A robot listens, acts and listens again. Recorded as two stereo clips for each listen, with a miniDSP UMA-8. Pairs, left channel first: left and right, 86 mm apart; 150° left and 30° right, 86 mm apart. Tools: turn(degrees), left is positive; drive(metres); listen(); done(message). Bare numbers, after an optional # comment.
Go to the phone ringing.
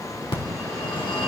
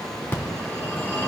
# The phone ringing: 85° left.
turn(85)
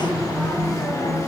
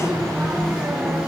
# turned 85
# The phone ringing is now 45° left.
turn(45)
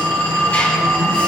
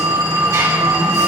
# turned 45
# The phone ringing is now 15° left.
turn(15)
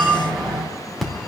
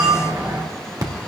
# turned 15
drive(1.0)
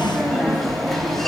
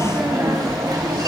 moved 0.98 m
drive(1.0)
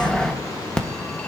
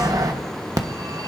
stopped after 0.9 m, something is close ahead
# The phone ringing is now 10° left.
turn(10)
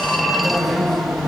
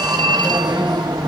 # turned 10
done("I am next to the phone ringing.")